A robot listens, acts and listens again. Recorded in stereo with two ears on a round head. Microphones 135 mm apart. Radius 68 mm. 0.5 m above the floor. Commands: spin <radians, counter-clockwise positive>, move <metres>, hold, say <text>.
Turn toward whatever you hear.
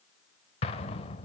spin 0.79
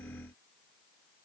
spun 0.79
hold
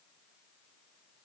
say I heard an explosion, but can't make it out now. It was about straight ahead or 90° left.